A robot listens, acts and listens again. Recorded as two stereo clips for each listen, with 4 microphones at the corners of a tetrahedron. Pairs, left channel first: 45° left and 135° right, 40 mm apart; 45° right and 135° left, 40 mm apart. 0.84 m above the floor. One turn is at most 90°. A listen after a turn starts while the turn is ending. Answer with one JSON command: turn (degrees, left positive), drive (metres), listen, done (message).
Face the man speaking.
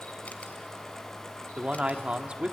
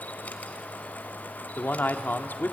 {"turn": -75}
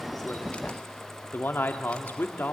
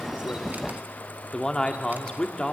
{"turn": 25}
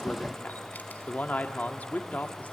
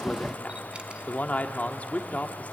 {"done": "Facing the man speaking."}